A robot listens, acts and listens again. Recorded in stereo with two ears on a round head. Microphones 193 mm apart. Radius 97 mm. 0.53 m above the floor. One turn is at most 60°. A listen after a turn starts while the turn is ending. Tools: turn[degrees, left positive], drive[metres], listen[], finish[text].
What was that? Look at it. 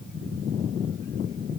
Action: listen[]
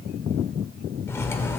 Action: turn[30]
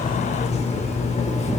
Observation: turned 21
Thought: So it is at 145° left.
Action: turn[60]
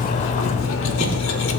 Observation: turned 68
Thought: The cutlery clinking is now 80° left.
Action: turn[60]
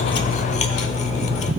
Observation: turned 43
Thought: The cutlery clinking is now 35° left.
Action: turn[35]
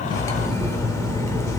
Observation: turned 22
Thought: The cutlery clinking is now 15° left.
Action: turn[15]
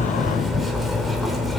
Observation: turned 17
Action: finish[Found it: cutlery clinking, straight ahead.]